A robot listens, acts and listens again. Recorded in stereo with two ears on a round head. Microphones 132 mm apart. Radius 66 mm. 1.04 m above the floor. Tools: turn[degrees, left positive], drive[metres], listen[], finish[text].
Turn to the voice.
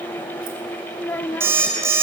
Action: turn[30]
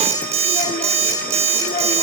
Action: listen[]
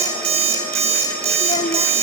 Action: listen[]
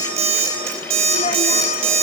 Action: finish[I heard a child speaking, but can't make it out now. It was about 20° right or 140° left.]